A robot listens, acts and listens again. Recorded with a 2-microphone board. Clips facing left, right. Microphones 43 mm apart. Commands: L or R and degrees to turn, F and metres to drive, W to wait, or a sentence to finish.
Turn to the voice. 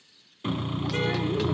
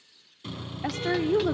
R70
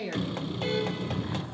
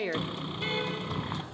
R40
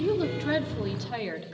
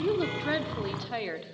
R10
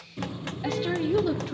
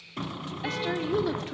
Found it: a woman speaking, straight ahead.